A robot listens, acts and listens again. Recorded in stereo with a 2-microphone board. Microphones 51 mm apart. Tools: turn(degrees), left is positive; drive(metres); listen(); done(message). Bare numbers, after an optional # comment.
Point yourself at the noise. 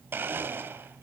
# The blender: about 45° right or 135° right.
turn(-45)
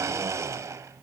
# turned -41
# So it is at 90° right.
turn(-90)
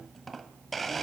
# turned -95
done("Facing the blender.")